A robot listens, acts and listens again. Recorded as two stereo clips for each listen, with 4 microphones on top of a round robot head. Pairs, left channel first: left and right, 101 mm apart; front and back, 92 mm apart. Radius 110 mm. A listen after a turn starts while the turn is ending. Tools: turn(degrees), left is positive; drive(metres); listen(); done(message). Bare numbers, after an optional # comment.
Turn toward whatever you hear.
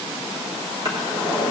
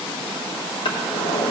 # The drawer: 35° right.
turn(-35)
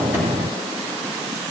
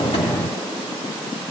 listen()
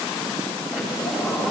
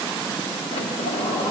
done("Facing the drawer, 1 to 2 m away.")